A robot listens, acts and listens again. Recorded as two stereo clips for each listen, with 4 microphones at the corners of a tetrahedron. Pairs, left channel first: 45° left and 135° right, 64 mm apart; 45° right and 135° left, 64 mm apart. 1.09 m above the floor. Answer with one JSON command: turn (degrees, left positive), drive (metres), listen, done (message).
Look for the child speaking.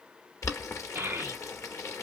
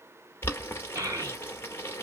{"turn": 170}
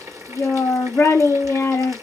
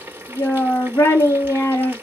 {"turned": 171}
{"done": "Facing the child speaking, 1 to 2 m away."}